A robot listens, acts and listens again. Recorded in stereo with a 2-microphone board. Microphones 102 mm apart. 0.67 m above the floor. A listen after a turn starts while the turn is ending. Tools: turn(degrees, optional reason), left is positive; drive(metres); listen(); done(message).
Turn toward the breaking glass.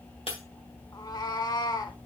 turn(degrees=65, reason="The breaking glass: about 65° left or 115° left.")
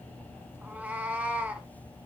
listen()
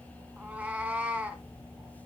done("I heard breaking glass, but can't make it out now. It was about straight ahead or 50° left.")